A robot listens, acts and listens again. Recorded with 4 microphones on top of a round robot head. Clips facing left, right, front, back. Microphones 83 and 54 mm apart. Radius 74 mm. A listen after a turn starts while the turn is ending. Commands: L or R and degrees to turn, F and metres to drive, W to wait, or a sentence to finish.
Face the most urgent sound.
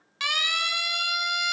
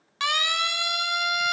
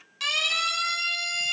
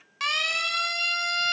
R135
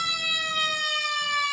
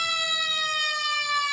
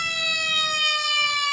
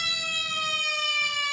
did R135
Found it: a siren, straight ahead, 2 to 4 m away.